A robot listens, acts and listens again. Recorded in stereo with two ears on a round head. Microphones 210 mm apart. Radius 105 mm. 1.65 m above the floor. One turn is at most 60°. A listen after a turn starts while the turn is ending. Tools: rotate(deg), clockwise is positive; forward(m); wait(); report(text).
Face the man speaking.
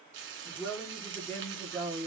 rotate(-30)
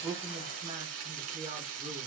wait()
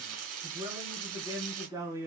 rotate(15)
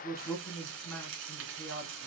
rotate(-10)
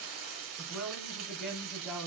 report("Found it: a man speaking, straight ahead, 2 to 4 m away.")